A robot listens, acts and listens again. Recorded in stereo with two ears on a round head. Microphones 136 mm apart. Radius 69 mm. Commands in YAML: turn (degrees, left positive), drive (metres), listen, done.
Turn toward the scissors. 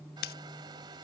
turn: 65
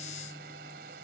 listen: true
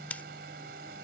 turn: 10
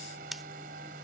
done: "Found it: scissors, straight ahead."